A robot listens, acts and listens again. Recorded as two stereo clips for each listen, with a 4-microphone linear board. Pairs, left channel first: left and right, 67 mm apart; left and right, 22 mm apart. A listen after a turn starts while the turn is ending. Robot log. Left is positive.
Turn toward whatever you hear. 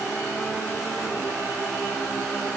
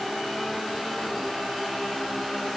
cmd idle
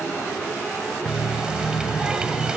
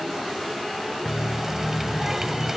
cmd yaw -30
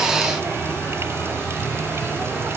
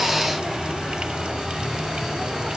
note: So it is at 140° right.
cmd yaw -140
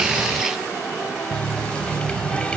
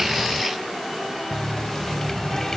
note: The running tap is now 15° left.
cmd yaw +15
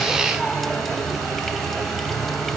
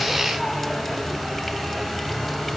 end: Facing the running tap.